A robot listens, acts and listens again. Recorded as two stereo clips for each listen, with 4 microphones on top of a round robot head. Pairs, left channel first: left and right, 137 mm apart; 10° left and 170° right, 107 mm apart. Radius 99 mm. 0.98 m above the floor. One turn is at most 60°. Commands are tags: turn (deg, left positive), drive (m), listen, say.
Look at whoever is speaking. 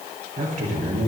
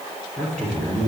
<turn deg="-60"/>
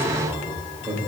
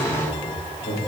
<turn deg="-20"/>
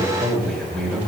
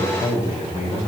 <say>Facing the man speaking, over 4 m away.</say>